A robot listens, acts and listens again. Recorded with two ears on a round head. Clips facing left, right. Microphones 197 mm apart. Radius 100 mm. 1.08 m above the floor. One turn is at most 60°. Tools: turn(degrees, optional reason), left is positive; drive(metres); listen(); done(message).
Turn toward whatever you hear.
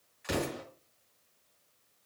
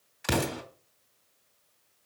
turn(degrees=-60, reason="The explosion: about 75° right or 105° right.")
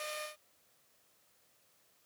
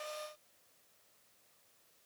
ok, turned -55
listen()
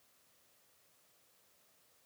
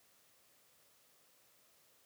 done("I heard an explosion, but can't make it out now. It was about 20° right or 50° right.")